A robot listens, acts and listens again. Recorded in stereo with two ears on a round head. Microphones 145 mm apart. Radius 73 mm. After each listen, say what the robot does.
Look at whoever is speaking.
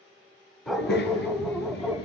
Turn 65° left.
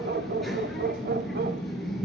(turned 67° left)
Found it: a child speaking, straight ahead, over 4 m away.